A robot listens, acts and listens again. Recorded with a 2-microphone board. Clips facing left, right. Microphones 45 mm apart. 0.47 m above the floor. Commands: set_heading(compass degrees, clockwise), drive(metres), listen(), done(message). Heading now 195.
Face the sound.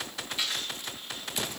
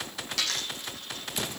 set_heading(270)
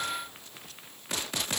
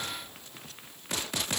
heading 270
listen()
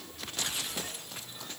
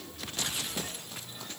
done("I heard a dropped coin, but can't make it out now. It was about straight ahead or 30° right.")